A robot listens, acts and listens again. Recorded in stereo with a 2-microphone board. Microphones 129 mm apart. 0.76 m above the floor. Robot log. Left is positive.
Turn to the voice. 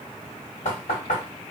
cmd idle
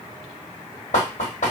cmd idle
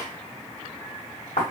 end: I can't make out anyone speaking, only knocking.